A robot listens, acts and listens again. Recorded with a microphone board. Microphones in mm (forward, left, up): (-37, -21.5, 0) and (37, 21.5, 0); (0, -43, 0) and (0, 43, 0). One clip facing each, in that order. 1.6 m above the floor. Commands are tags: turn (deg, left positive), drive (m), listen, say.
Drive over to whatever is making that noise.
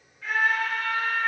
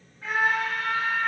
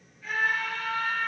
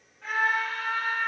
<turn deg="95"/>
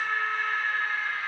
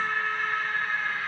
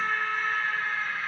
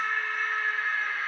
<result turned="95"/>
<turn deg="10"/>
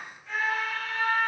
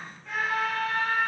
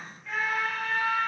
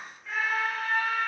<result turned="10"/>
<drive m="1.0"/>
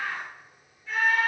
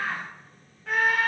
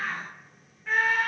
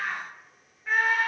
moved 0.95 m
<drive m="1.0"/>
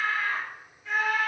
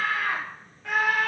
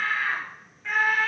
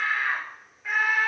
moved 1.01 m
<drive m="1.0"/>
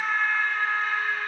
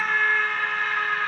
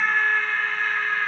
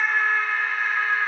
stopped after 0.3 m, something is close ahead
<say>I am next to the scream.</say>